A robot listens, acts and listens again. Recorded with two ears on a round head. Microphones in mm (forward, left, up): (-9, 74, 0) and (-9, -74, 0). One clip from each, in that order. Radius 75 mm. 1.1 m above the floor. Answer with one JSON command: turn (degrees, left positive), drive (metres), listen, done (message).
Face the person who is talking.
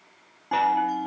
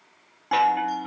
{"listen": true}
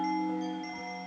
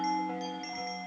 {"listen": true}
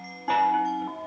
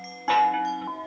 {"done": "I can't make out anyone speaking, only a chime."}